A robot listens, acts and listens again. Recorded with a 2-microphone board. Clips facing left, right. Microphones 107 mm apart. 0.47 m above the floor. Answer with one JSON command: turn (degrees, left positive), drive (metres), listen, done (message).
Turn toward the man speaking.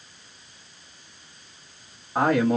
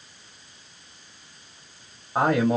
{"turn": -20}
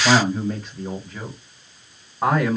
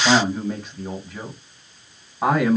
{"turn": -30}
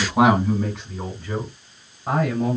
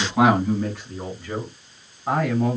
{"turn": 25}
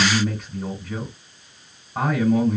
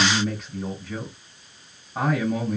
{"done": "Found it: a man speaking, straight ahead."}